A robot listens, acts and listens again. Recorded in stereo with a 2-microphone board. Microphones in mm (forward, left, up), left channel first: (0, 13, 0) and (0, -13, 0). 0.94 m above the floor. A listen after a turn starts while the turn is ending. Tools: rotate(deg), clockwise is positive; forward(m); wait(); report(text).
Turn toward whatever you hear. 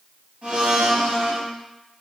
rotate(50)
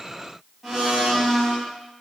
report("Found it: a blender, straight ahead, 1 to 2 m away.")